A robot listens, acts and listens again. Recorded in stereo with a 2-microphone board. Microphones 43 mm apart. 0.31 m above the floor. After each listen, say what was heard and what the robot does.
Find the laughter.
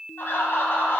The laughter: about 65° left or 115° left. Turn 65° left.
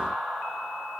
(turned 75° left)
Found it: laughter, straight ahead, 2 to 4 m away.